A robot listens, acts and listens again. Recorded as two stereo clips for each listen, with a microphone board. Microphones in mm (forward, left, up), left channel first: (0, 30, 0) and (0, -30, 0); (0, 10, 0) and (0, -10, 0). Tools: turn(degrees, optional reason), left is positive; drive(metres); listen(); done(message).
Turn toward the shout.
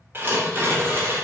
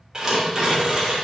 listen()
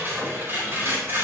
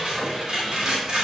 listen()
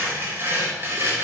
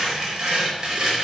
done("I can't make out a shout, only tearing paper.")